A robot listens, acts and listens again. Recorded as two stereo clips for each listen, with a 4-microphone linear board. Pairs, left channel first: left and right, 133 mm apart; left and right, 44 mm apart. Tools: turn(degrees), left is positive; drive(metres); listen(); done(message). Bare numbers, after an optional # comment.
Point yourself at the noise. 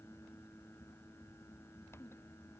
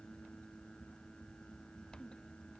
listen()
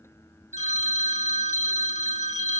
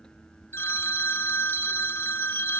# The phone ringing: about 60° left or 120° left.
turn(60)
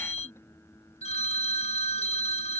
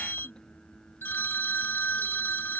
# So it is at 55° left.
turn(55)
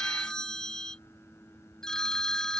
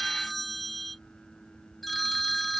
done("Found it: a phone ringing, straight ahead.")